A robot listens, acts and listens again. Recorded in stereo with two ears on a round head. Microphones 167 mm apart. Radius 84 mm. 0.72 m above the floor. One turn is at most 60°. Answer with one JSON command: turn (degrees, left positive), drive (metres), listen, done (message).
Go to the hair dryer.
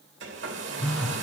{"turn": -60}
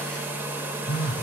{"turn": -10}
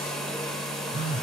{"drive": 1.0}
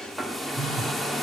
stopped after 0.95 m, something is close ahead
{"done": "Arrived at the hair dryer, straight ahead."}